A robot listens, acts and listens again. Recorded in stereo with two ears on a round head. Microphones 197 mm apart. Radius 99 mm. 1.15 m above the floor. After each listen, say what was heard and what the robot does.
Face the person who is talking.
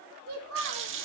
The child speaking: about 70° right or 110° right. Turn 70° right.
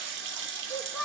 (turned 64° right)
Found it: a child speaking, straight ahead.